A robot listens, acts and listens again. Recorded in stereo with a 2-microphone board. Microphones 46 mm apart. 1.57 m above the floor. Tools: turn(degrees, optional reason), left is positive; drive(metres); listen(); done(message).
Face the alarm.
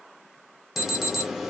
turn(degrees=-30)
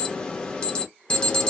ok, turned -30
turn(degrees=25, reason="So it is at 25° left.")
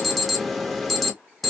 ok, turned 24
done("Facing the alarm.")